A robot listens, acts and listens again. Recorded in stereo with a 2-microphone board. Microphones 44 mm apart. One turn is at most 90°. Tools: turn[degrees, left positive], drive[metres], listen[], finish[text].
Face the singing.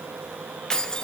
Action: listen[]
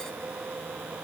Action: listen[]
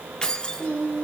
Thought: The singing: about 35° left or 145° left.
Action: turn[35]
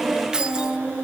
Thought: So it is at 120° left.
Action: turn[90]
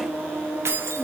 Thought: The singing is now 25° left.
Action: turn[25]
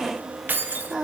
Action: finish[Facing the singing.]